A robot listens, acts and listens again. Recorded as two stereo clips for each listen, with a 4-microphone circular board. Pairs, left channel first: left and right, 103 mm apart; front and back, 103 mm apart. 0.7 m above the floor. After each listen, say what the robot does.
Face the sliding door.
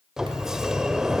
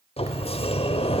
Found it: a sliding door, straight ahead, under 1 m away.